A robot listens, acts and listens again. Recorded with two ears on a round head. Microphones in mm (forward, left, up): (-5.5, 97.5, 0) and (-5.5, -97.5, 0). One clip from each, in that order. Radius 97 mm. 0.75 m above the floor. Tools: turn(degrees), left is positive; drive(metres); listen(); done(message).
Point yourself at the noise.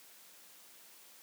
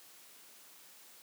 listen()
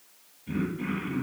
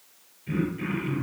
turn(degrees=-70)
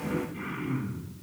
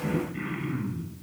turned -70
turn(degrees=-45)
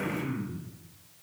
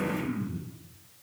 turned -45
turn(degrees=15)
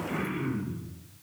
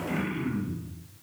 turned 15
done("Facing the throat clearing, over 4 m away.")